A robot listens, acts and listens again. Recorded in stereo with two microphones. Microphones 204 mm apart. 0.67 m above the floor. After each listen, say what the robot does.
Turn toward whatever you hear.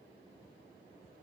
Keep listening.
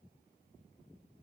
Keep listening.
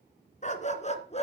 Turn 30° left.
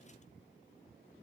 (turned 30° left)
Keep listening.
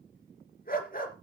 Turn 45° left.
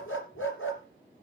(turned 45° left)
Turn 100° left.
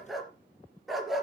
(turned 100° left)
Found it: a dog barking, straight ahead.